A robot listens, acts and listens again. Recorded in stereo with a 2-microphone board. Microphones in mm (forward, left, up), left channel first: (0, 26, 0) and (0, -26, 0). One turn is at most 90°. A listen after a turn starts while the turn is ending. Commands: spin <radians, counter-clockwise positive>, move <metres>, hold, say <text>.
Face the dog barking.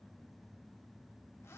hold
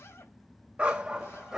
spin -0.52
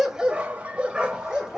spin -0.52
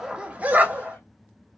spin -1.57
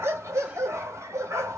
spin -1.48
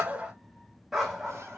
say Found it: a dog barking, straight ahead, 1 to 2 m away.